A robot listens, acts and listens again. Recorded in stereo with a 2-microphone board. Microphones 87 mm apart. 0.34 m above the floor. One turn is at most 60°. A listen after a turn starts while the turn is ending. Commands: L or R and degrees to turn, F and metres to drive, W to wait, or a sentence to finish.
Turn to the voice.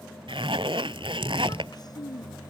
L50
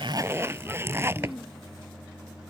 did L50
Facing the child speaking.